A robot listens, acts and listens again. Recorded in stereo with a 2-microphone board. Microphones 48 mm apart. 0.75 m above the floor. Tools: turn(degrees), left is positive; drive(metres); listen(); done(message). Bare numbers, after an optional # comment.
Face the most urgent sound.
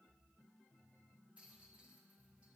listen()
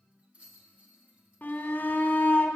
# The shout: about 40° left or 140° left.
turn(40)
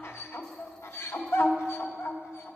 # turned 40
# So it is at 95° left.
turn(95)
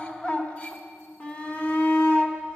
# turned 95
# The shout is now 30° left.
turn(30)
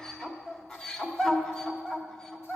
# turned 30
# The shout is now 15° left.
turn(15)
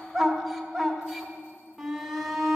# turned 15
done("Facing the shout, 1 to 2 m away.")